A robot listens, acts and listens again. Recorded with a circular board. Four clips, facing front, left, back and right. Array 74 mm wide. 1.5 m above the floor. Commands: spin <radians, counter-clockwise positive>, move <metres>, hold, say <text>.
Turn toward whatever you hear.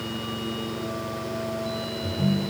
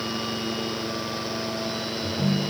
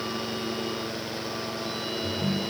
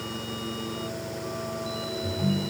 spin 1.83
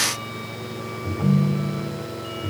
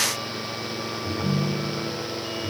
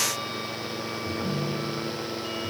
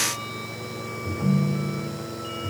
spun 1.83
spin 0.52
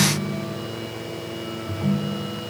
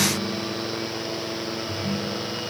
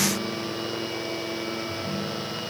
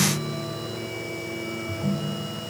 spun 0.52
spin 0.26
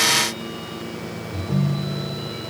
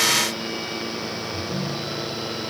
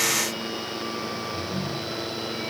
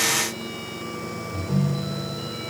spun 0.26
say Facing the ringtone, 2 to 4 m away.